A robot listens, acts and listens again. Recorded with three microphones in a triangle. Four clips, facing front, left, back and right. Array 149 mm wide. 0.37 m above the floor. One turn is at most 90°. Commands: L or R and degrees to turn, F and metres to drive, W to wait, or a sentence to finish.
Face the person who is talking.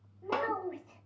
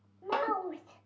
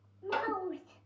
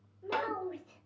L75
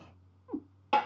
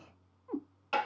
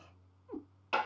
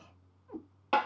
W
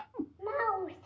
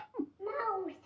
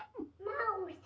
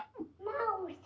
R10
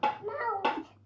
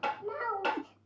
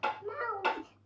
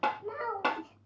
Facing the child speaking.